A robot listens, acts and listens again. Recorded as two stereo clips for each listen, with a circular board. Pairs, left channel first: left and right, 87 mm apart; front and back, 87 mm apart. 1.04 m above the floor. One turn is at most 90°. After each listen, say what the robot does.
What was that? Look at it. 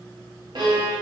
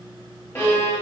Turn 60° right.
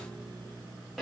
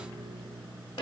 Facing the violin.